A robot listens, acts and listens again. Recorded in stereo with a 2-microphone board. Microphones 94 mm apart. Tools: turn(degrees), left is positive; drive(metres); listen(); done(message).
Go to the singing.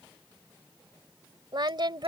turn(degrees=-55)
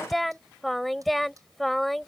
drive(metres=1.0)
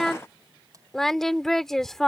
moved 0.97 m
drive(metres=1.0)
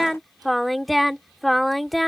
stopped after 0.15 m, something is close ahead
done("I am next to the singing.")